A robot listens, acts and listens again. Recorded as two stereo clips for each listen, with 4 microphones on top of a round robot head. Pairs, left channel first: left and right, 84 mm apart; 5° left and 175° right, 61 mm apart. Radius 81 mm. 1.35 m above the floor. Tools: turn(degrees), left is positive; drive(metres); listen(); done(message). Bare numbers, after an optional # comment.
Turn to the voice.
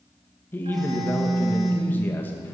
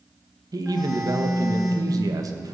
# The man speaking: 160° left.
turn(160)
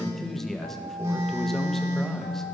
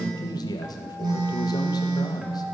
done("Found it: a man speaking, straight ahead, 1 to 2 m away.")